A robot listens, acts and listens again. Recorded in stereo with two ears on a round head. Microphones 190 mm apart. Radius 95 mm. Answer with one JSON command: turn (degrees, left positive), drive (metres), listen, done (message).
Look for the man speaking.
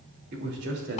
{"turn": -55}
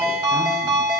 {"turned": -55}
{"listen": true}
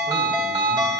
{"listen": true}
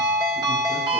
{"done": "I heard a man speaking, but can't make it out now. It was about straight ahead or 70° right."}